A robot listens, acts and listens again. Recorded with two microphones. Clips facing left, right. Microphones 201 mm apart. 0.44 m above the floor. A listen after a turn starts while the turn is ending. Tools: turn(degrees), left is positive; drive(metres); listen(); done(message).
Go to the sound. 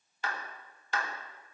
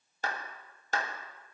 turn(degrees=-40)
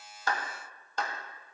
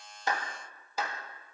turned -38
turn(degrees=-10)
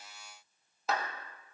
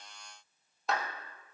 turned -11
drive(metres=1.0)
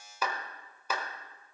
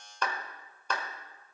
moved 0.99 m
turn(degrees=10)
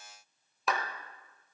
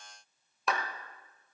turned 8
drive(metres=1.0)
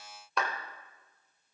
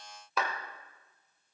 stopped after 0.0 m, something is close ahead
done("I am next to the clap.")